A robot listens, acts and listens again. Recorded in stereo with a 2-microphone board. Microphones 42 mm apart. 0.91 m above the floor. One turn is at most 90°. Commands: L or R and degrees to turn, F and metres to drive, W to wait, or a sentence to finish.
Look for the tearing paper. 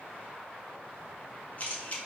W
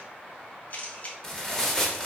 L30
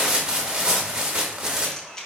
R15
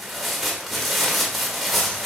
Facing the tearing paper.